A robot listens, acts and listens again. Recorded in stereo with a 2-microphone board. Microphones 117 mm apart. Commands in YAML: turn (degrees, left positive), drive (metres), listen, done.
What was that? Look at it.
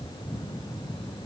listen: true
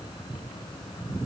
listen: true
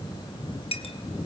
turn: 60
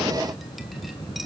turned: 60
listen: true
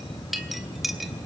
done: "Found it: a clink, straight ahead, 2 to 4 m away."